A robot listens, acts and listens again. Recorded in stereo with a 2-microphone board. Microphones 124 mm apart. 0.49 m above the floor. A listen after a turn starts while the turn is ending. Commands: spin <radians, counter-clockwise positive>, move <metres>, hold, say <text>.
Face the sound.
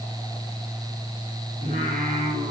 spin -1.57
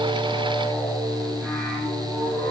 say Facing the singing, over 4 m away.